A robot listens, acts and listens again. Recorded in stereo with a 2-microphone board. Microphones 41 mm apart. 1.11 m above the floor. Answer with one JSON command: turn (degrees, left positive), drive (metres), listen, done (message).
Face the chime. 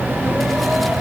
{"listen": true}
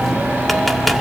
{"listen": true}
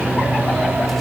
{"done": "I can't make out a chime."}